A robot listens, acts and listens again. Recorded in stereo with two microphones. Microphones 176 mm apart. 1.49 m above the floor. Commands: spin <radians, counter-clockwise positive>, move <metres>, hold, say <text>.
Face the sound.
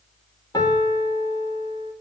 spin 0.35
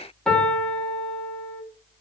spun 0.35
say Found it: a piano, straight ahead, 2 to 4 m away.